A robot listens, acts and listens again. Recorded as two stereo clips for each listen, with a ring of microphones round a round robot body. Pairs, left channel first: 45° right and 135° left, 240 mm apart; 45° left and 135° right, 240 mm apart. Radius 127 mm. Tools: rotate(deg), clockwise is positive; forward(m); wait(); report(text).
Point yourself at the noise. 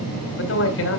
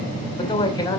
rotate(30)
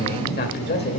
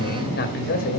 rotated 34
report("Facing the man speaking, 2 to 4 m away.")